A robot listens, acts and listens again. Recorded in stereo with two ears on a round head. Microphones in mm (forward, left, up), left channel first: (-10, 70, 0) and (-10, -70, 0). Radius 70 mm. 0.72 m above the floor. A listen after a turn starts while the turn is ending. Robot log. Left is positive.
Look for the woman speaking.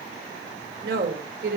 note: The woman speaking: about 70° right or 110° right.
cmd yaw -70
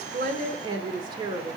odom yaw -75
note: So it is at 30° right.
cmd yaw -30
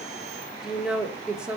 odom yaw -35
end: Found it: a woman speaking, straight ahead, 1 to 2 m away.